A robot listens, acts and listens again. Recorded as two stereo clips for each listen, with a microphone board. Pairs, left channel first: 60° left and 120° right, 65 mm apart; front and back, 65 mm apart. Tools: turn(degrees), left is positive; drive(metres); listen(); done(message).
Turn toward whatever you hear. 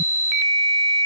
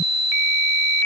listen()
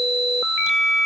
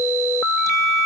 listen()
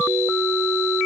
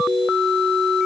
done("I can't make out anything.")